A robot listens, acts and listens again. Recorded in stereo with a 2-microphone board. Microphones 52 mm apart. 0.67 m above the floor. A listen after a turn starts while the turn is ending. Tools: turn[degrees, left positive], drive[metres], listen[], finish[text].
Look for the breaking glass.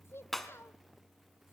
Action: turn[30]
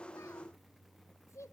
Action: listen[]
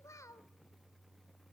Action: finish[I heard breaking glass, but can't make it out now. It was about 25° right or 145° left.]